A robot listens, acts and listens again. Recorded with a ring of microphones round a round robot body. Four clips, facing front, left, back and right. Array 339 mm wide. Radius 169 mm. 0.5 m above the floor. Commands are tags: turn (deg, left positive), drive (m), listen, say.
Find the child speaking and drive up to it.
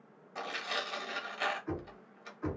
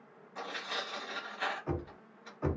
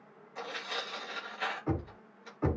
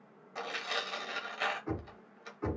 <listen/>
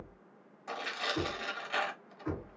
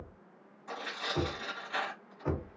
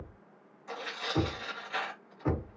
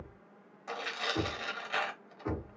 <listen/>
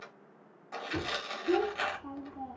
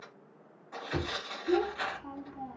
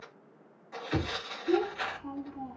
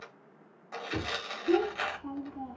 <turn deg="-115"/>
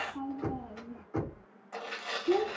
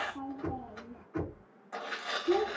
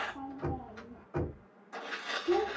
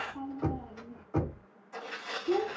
<turn deg="-10"/>
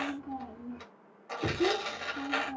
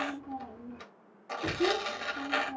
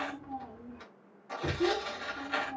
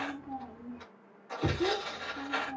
<drive m="1.0"/>
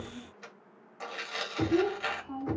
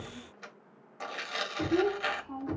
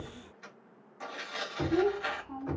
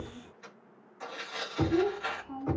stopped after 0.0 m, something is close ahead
<say>Blocked. The child speaking is further on, straight ahead.</say>